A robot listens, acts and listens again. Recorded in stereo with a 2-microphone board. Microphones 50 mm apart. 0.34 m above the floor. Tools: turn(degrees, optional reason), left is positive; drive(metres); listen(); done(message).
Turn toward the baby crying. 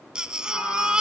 turn(degrees=-15, reason="The baby crying: about 15° right or 165° right.")
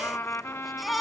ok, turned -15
done("Facing the baby crying, 1 to 2 m away.")